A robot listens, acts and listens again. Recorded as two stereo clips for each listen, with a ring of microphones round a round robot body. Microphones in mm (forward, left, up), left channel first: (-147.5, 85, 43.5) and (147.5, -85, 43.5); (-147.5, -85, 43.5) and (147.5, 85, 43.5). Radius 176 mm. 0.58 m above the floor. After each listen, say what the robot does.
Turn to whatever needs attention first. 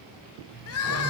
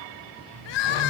Turn 160° right.
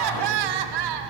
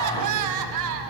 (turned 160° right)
Turn 10° right.
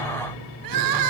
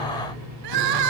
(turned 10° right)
Facing the crying, under 1 m away.